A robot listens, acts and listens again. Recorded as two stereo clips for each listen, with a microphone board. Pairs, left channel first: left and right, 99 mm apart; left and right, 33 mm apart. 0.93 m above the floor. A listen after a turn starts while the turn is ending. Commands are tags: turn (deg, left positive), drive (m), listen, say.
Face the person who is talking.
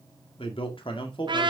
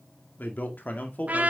<turn deg="60"/>
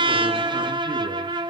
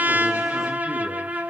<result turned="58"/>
<listen/>
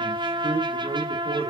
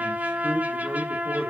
<turn deg="-50"/>
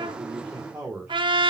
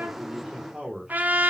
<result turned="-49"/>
<turn deg="-10"/>
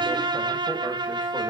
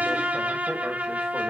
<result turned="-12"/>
<listen/>
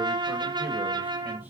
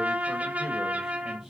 <listen/>
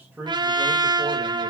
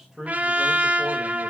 <turn deg="-10"/>
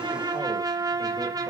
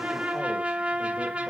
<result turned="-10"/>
<listen/>
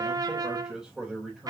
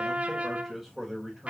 <say>Facing the man speaking.</say>